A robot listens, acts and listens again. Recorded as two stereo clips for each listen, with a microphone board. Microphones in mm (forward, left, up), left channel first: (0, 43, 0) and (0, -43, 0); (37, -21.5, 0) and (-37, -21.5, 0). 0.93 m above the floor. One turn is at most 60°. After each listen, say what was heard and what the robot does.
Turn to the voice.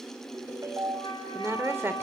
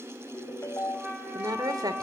The woman speaking: 155° right. Turn 60° right.
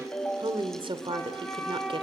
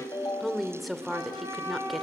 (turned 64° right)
The woman speaking is now 90° right. Turn 60° right.
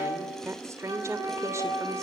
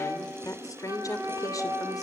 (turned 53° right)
The woman speaking is now 35° right. Turn 35° right.
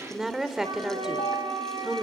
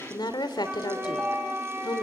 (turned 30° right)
Found it: a woman speaking, straight ahead, 2 to 4 m away.